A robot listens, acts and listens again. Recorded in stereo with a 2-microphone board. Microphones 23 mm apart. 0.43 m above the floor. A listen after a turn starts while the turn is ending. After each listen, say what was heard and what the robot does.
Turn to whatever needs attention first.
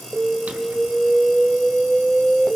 Turn 30° right.
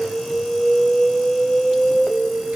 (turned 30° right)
So it is at 15° left. Turn 15° left.
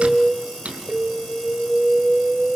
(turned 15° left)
Found it: an alarm, straight ahead, 2 to 4 m away.